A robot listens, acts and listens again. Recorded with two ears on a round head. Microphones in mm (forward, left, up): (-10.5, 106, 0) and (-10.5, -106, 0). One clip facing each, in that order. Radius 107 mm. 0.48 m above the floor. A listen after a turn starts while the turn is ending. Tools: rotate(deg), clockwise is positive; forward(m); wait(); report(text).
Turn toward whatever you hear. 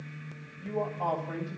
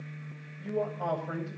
rotate(30)
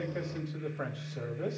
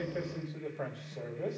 rotate(-15)
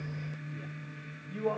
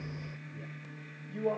report("Found it: a man speaking, straight ahead, 2 to 4 m away.")